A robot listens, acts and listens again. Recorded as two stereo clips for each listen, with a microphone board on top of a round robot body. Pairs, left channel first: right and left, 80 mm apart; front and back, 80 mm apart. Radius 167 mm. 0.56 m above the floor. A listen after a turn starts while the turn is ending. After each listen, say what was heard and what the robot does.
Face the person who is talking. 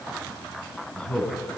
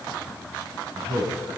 The man speaking: 170° right. Turn 170° right.
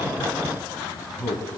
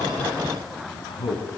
Facing the man speaking, over 4 m away.